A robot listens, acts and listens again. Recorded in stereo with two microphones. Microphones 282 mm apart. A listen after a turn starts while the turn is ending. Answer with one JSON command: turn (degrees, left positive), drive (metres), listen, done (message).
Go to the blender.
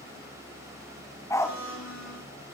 {"turn": 70}
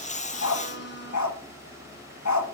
{"turn": 40}
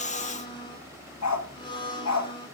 {"turn": 15}
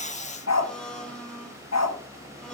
{"drive": 1.0}
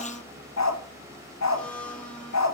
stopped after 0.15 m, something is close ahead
{"done": "Something is in my way. I am facing the blender but have not reached it."}